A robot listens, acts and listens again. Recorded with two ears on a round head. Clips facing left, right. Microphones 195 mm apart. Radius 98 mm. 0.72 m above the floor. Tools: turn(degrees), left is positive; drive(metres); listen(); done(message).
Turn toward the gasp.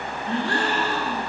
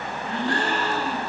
turn(degrees=55)
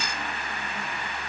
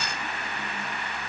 listen()
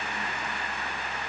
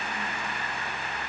done("I heard a gasp, but can't make it out now. It was about straight ahead or 70° left.")